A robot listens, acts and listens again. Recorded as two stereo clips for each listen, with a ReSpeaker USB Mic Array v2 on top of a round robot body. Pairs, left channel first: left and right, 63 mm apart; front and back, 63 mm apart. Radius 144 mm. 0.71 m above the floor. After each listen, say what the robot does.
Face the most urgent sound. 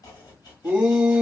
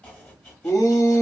Turn 20° right.
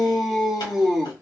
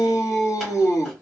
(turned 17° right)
Found it: a shout, straight ahead, 1 to 2 m away.